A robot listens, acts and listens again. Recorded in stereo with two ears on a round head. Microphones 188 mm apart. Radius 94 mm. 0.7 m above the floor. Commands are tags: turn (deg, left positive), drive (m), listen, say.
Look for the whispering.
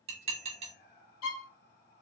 <turn deg="50"/>
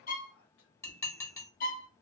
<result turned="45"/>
<turn deg="80"/>
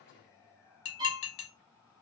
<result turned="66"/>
<turn deg="15"/>
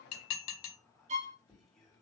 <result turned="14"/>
<say>Found it: whispering, straight ahead.</say>